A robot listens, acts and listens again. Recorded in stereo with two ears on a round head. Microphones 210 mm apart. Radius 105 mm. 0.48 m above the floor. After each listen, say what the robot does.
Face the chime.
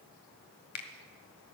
Keep listening.
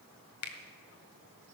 Keep listening.
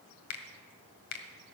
I can't make out a chime to turn to.